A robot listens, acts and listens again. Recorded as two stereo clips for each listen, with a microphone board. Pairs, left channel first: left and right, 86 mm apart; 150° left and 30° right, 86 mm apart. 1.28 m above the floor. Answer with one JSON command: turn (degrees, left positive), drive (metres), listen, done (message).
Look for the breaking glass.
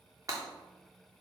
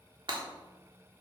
{"turn": -45}
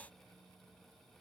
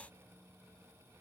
{"done": "I heard breaking glass from this way, but can't make it out now."}